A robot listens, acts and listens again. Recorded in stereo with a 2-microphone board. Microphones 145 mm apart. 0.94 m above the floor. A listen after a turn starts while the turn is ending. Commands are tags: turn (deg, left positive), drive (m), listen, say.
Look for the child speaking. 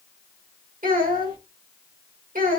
<turn deg="-90"/>
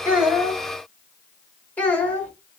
<turn deg="10"/>
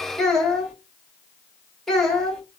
<say>Found it: a child speaking, straight ahead.</say>